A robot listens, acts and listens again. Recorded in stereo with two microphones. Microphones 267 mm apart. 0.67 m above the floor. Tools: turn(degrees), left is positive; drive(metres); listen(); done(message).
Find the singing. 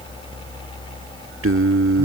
turn(degrees=-60)
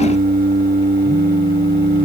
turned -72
turn(degrees=-40)
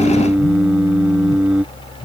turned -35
done("Facing the singing.")